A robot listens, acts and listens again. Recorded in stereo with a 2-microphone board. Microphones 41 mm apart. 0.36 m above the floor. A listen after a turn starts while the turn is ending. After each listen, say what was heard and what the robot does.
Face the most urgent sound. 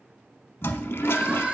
The crying: about 30° right or 150° right. Turn 30° right.
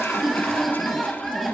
Keep listening.
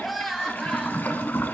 Found it: crying, straight ahead.